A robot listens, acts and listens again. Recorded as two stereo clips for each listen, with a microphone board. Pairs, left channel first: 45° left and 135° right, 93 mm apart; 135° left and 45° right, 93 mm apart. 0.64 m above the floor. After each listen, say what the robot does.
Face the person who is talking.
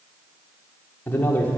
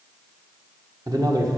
Turn 15° right.
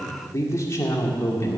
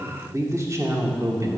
Facing the man speaking, 1 to 2 m away.